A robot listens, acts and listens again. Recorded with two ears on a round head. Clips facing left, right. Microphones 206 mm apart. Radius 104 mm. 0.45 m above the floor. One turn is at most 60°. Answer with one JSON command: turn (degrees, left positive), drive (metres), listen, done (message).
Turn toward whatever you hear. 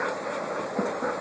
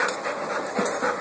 {"listen": true}
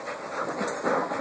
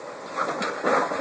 {"listen": true}
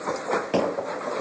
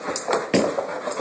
{"turn": -30}
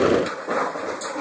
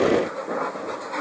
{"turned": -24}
{"listen": true}
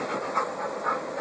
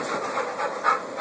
{"done": "I heard a door slam, but can't make it out now. It was about 5° right or 125° right."}